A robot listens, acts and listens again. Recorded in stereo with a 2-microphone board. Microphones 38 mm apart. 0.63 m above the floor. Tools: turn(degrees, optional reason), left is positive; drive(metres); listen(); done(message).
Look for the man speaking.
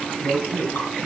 turn(degrees=70, reason="The man speaking: about 70° left or 110° left.")
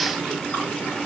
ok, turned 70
listen()
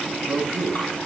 done("Found it: a man speaking, straight ahead, over 4 m away.")